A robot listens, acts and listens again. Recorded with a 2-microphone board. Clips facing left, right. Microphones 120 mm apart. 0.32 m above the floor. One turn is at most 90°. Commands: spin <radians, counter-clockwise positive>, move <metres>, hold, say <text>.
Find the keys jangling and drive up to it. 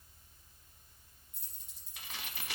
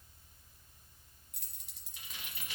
spin -1.31
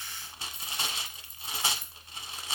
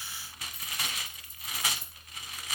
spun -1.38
spin -0.44
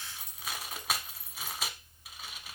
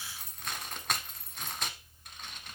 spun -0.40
move 1.0
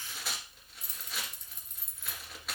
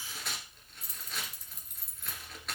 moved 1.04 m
move 1.0
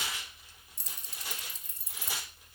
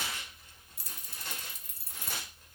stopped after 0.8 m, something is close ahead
spin -0.17
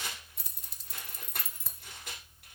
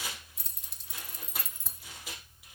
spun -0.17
say Arrived at the keys jangling, straight ahead.